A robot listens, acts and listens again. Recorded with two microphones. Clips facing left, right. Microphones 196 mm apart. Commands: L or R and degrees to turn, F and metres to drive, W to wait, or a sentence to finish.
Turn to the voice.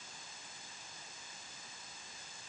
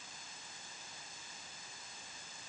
W
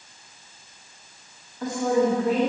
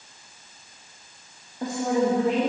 R20
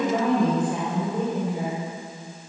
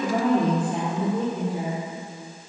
R30
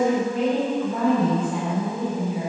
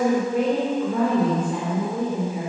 R120
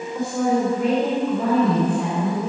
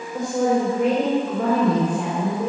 R55
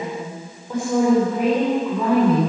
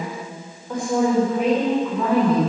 Found it: a woman speaking, straight ahead.